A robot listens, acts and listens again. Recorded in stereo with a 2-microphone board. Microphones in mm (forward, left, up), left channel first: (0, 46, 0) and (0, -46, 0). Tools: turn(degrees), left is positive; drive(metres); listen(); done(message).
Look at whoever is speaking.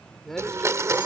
turn(degrees=30)
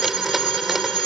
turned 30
listen()
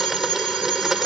listen()
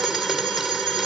done("I heard a man speaking, but can't make it out now. It was about 25° right or 145° left.")